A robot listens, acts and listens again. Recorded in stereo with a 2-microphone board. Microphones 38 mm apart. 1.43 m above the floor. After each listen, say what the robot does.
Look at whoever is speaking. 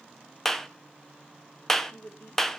Turn 55° left.
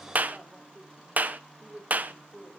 Turn 10° right.
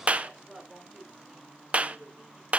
Found it: a woman speaking, straight ahead, over 4 m away.